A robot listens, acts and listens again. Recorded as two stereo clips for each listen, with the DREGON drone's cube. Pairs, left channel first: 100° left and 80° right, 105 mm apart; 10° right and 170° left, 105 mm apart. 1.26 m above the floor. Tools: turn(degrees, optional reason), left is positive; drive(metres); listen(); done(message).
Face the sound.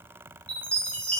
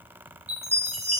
turn(degrees=180, reason="The chime: straight behind.")
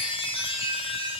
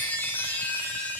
turn(degrees=60, reason="The chime is now 60° left.")
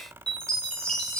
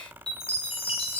turn(degrees=15, reason="The chime is now 15° left.")
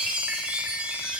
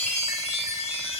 done("Facing the chime, under 1 m away.")